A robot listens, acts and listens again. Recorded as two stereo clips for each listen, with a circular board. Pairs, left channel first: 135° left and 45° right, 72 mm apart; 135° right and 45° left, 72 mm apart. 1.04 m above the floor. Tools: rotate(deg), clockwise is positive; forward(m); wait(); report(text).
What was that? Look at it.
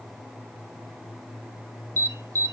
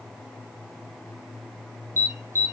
report("Found it: an alarm, straight ahead.")